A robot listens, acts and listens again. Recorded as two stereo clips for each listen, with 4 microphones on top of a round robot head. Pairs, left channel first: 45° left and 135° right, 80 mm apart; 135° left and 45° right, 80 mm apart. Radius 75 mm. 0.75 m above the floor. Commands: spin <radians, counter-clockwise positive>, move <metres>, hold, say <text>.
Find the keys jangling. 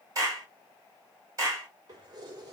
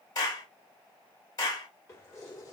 spin -3.05
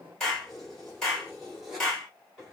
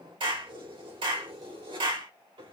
spin -0.79
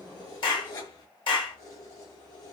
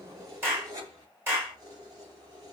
say Facing the keys jangling.